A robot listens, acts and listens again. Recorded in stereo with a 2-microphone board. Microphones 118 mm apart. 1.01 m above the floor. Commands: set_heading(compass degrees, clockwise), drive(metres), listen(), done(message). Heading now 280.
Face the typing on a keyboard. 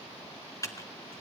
set_heading(255)
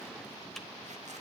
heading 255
listen()
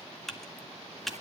done("Facing the typing on a keyboard, 1 to 2 m away.")